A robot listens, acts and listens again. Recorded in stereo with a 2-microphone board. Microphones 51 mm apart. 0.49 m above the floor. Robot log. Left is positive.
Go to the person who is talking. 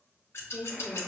note: The woman speaking: about 40° left or 140° left.
cmd yaw +40
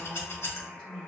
note: So it is at 10° left.
cmd yaw +10
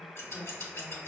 cmd fwd 1.0
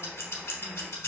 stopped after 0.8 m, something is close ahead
cmd idle
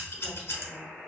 cmd idle
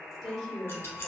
end: Arrived at the woman speaking, straight ahead.